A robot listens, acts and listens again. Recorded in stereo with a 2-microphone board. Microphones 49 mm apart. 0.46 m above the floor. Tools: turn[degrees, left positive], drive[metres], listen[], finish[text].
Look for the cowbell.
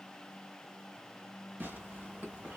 Action: listen[]
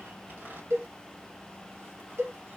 Thought: The cowbell: about 65° right or 115° right.
Action: turn[-65]
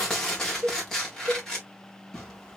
Thought: So it is at 50° right.
Action: turn[-50]
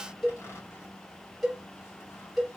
Action: finish[Found it: a cowbell, straight ahead, 1 to 2 m away.]